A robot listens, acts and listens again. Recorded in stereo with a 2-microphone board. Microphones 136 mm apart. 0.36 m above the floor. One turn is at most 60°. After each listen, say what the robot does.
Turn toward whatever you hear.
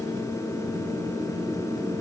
Keep listening.
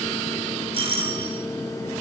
Turn 45° right.
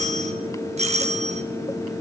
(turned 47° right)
Turn 60° right.
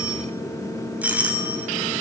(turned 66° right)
Turn 10° right.
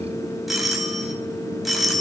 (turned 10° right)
Found it: a doorbell, straight ahead, 2 to 4 m away.